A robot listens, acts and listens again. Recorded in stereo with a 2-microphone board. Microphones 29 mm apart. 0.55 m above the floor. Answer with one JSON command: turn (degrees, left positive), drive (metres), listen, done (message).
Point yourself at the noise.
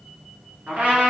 {"turn": -70}
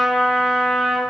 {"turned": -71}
{"turn": -25}
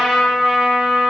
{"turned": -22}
{"done": "Facing the trumpet."}